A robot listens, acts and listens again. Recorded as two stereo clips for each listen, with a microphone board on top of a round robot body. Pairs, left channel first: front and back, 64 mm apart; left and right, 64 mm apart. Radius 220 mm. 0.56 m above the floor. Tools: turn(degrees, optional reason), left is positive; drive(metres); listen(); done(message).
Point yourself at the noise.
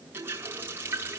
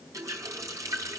turn(degrees=-125, reason="The running tap: 125° right.")
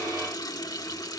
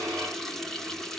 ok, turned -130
done("Facing the running tap.")